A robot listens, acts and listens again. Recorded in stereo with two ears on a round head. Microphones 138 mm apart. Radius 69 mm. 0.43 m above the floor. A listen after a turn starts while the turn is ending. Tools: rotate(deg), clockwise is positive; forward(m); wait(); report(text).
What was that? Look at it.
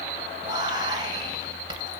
rotate(30)
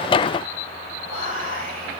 rotate(115)
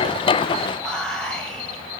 report("Found it: whispering, straight ahead, 1 to 2 m away.")